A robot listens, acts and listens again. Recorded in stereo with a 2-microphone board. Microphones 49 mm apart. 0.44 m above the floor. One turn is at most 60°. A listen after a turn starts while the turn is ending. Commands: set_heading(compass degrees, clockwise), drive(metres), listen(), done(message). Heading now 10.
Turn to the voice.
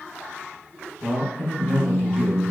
set_heading(325)
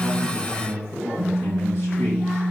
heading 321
set_heading(261)
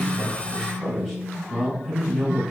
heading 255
set_heading(245)
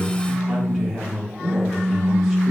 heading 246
done("Found it: a man speaking, straight ahead, 1 to 2 m away.")